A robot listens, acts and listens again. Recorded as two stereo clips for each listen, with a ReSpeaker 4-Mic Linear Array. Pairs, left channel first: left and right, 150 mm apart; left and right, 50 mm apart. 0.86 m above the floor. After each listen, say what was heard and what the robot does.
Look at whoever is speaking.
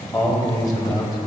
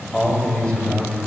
The man speaking: about 25° left or 155° left. Turn 25° left.
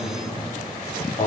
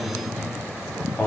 So it is at 130° left. Turn 130° left.
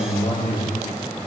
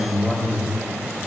The man speaking is now 40° left. Turn 40° left.
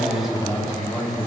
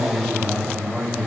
Found it: a man speaking, straight ahead.